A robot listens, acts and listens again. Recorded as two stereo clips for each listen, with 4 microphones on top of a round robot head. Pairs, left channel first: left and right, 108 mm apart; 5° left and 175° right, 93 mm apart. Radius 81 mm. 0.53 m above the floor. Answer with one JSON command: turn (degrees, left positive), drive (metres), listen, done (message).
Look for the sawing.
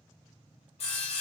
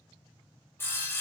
{"turn": 70}
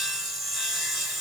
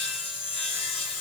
{"done": "Facing the sawing."}